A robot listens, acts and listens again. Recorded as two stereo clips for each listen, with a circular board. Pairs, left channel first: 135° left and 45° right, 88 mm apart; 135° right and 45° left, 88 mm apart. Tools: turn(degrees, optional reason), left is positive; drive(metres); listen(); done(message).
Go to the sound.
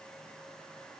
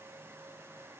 listen()
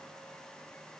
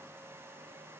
listen()
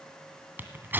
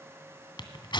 turn(degrees=-110, reason="The tearing paper: 110° right.")
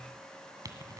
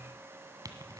listen()
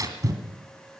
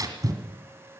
drive(metres=1.0)
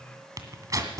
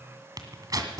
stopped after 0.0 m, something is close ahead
done("Something is in my way. I am facing the tearing paper but have not reached it.")